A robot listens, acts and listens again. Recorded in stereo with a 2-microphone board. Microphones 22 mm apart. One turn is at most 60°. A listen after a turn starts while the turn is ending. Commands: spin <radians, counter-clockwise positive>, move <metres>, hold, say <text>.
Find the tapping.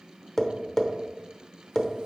spin 0.35
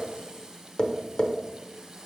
spin 1.05
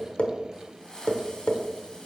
spin 1.05
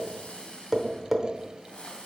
spin -0.17
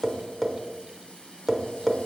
say Found it: tapping, straight ahead.